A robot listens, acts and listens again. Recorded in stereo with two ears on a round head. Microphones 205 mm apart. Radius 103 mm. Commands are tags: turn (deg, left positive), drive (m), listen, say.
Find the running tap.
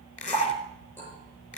<turn deg="30"/>
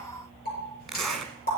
<turn deg="140"/>
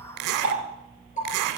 <turn deg="35"/>
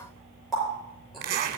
<say>Found it: a running tap, straight ahead.</say>